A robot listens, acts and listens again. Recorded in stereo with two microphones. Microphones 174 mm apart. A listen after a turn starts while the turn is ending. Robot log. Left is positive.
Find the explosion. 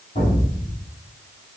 note: The explosion: about 45° left or 135° left.
cmd yaw +45
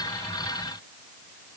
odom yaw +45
cmd idle
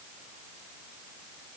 end: I heard an explosion, but can't make it out now. It was about straight ahead or 90° left.